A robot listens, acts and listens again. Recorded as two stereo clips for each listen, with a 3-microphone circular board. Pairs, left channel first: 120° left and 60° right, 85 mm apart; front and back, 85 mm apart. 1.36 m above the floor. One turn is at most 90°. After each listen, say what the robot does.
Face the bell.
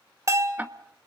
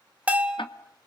Turn 90° right.
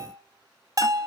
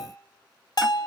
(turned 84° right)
Turn 25° right.
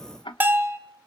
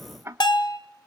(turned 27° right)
Facing the bell.